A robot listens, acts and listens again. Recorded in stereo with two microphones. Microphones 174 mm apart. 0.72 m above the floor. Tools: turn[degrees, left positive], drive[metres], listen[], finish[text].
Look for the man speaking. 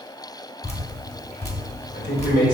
Action: turn[90]
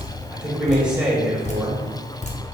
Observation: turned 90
Action: finish[Facing the man speaking.]